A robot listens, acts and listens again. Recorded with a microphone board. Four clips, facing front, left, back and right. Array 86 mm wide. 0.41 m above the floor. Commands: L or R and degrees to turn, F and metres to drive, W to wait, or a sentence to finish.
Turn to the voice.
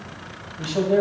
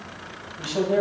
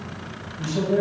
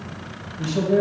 L45
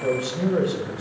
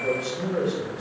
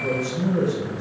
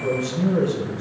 Found it: a man speaking, straight ahead, 2 to 4 m away.